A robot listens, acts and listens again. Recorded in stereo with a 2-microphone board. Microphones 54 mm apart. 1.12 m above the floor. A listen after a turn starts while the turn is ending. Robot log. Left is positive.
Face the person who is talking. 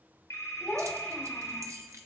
note: The child speaking: about 20° left or 160° left.
cmd yaw +20
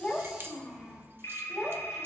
end: Found it: a child speaking, straight ahead.